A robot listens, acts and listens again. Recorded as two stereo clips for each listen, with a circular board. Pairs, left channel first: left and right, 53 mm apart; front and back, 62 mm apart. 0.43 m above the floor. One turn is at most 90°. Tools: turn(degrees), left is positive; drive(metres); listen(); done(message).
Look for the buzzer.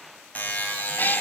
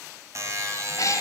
turn(degrees=90)
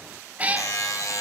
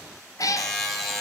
turn(degrees=90)
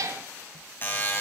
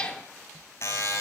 turn(degrees=40)
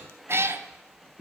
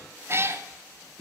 listen()
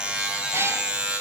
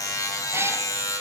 turn(degrees=-15)
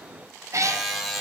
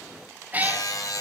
done("Found it: a buzzer, straight ahead.")